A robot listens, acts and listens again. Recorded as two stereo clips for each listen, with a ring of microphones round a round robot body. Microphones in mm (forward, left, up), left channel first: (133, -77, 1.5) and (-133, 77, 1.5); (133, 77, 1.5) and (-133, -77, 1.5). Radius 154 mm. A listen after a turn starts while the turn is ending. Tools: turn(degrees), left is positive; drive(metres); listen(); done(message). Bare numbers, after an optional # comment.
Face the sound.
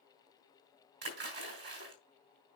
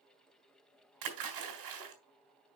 # The splash: 155° right.
turn(-155)
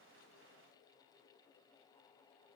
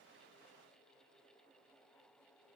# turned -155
done("I heard a splash from this way, but can't make it out now.")